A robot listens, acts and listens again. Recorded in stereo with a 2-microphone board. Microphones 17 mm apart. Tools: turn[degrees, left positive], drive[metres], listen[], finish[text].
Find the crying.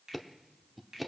Action: listen[]
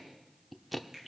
Action: listen[]
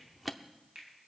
Action: finish[I can't make out crying to turn to.]